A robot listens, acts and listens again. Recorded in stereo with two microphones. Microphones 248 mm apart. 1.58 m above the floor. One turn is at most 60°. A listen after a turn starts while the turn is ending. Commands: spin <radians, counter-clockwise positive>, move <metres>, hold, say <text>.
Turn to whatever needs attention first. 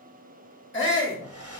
spin 0.87
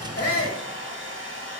hold
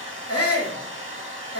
spin 1.05
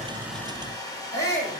spin 0.17
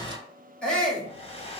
say Found it: a shout, straight ahead, 2 to 4 m away.